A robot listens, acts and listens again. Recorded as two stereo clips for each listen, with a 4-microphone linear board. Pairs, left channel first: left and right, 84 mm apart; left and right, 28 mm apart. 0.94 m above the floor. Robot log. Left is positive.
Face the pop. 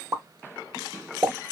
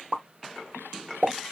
note: The pop: about 40° right or 140° right.
cmd yaw -40
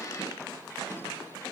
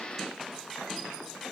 cmd idle
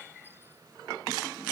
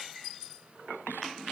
end: I heard a pop, but can't make it out now. It was about straight ahead or 100° right.